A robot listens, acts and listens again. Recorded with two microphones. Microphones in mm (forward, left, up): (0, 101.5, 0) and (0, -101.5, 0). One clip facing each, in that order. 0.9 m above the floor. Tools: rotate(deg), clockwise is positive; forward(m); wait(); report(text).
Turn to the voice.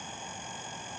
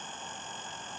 wait()
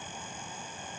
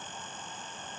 wait()
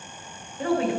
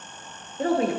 rotate(40)
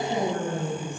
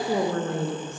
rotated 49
rotate(90)
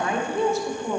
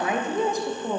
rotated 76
rotate(15)
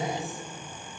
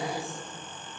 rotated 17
report("Found it: a woman speaking, straight ahead, under 1 m away.")